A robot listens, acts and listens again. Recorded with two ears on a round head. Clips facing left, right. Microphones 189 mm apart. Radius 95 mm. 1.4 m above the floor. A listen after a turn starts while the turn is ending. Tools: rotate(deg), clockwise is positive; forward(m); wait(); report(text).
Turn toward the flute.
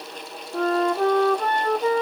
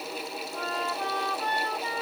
rotate(-45)
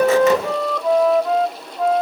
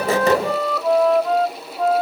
report("Found it: a flute, straight ahead.")